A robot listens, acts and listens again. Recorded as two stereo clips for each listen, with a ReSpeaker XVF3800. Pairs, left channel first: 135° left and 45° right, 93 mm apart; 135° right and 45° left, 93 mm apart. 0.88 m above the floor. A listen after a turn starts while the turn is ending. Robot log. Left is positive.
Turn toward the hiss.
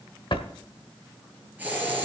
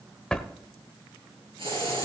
note: The hiss: 25° left.
cmd yaw +25
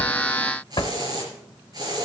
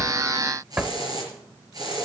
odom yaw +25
end: Found it: a hiss, straight ahead, over 4 m away.